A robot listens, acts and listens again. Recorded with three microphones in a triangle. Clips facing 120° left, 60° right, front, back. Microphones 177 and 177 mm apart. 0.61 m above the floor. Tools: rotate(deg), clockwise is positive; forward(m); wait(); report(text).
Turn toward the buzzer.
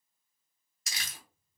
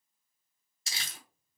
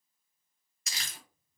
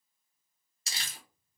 wait()
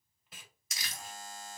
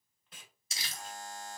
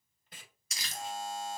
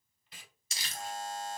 rotate(155)
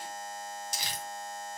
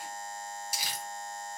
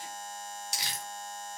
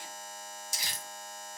rotate(15)
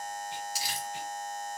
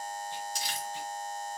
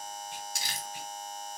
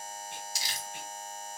report("Found it: a buzzer, straight ahead, 1 to 2 m away.")